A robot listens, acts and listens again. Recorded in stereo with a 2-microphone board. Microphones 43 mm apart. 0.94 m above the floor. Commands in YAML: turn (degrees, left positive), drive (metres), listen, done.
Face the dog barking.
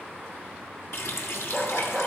turn: 30
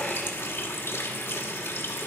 listen: true
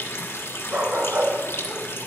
turn: -45
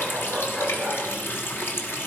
done: "Found it: a dog barking, straight ahead."